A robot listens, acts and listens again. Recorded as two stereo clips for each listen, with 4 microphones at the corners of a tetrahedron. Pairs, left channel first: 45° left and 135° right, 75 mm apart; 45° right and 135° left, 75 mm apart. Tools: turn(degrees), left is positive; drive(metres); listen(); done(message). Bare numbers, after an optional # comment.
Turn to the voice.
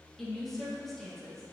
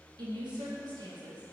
# The woman speaking: 130° left.
turn(130)
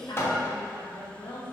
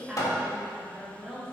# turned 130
# The woman speaking is now 50° left.
turn(50)
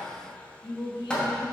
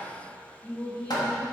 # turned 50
# The woman speaking is now 25° left.
turn(25)
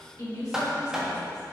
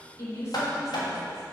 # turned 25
done("Found it: a woman speaking, straight ahead.")